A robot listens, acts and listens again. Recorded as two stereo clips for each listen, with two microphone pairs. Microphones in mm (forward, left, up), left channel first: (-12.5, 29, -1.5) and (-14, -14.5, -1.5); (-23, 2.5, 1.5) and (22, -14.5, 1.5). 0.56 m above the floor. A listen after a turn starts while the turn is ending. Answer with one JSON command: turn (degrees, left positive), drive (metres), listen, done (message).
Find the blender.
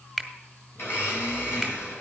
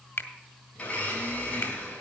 {"turn": 100}
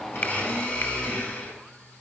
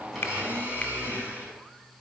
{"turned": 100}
{"turn": 20}
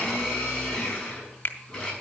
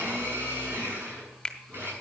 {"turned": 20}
{"done": "Facing the blender, over 4 m away."}